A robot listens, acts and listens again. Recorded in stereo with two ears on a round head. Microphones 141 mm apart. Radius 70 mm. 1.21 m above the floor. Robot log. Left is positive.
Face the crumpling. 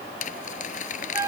note: The crumpling: about 50° left or 130° left.
cmd yaw +50
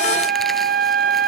cmd idle
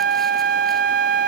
cmd idle
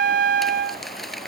end: Facing the crumpling.